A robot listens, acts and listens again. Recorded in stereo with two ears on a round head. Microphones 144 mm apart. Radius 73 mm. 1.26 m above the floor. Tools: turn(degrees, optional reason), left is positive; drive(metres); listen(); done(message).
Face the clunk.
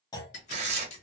turn(degrees=25, reason="The clunk: about 25° left or 155° left.")
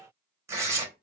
listen()
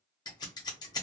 done("I heard a clunk, but can't make it out now. It was about straight ahead or 130° left.")